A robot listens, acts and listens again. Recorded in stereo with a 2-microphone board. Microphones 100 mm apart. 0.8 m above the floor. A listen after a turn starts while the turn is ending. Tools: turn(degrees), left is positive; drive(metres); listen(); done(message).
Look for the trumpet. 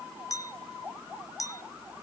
listen()
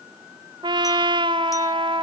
turn(degrees=-50)
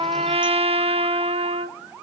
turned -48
turn(degrees=-80)
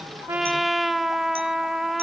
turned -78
done("Facing the trumpet, under 1 m away.")